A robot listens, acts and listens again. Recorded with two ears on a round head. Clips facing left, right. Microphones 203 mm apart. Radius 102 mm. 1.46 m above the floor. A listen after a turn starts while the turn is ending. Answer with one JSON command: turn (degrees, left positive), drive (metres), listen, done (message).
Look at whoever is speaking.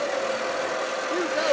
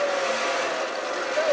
{"turn": 55}
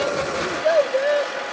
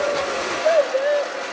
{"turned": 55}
{"turn": 10}
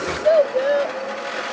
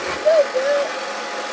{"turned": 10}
{"done": "Facing the child speaking."}